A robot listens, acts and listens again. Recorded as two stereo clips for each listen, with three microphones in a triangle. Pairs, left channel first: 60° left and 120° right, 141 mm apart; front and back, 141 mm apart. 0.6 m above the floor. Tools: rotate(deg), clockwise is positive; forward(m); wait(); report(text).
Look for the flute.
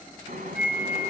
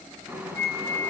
rotate(-165)
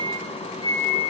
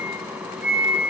rotate(-10)
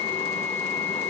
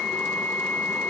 report("Found it: a flute, straight ahead, 2 to 4 m away.")